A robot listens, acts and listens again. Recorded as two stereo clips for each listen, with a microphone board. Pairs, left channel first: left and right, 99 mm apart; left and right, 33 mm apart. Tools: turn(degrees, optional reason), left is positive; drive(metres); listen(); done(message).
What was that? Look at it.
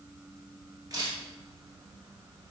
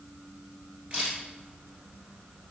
turn(degrees=-40, reason="The camera shutter: about 40° right or 140° right.")
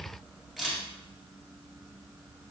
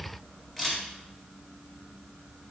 done("Facing the camera shutter.")